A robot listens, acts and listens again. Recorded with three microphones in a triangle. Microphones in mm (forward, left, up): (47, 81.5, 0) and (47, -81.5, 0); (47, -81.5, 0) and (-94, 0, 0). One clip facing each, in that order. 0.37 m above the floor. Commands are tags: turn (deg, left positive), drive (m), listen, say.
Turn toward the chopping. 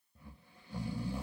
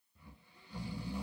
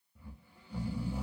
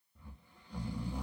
<listen/>
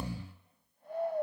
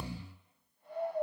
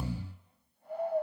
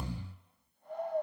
<listen/>
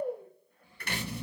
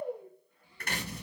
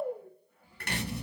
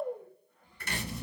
<turn deg="-50"/>
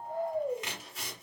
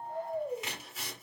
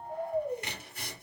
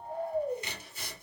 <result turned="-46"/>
<say>Facing the chopping.</say>